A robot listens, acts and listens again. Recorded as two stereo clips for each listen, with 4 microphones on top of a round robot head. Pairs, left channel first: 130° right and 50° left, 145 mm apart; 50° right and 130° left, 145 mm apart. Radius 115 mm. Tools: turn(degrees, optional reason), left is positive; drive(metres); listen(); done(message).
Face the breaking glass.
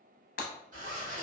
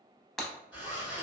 turn(degrees=-135, reason="The breaking glass: 135° right.")
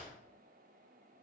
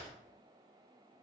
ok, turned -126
turn(degrees=-10, reason="Nothing new. It was at 10° right.")
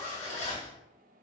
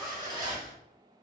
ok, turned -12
done("I heard breaking glass from this way, but can't make it out now.")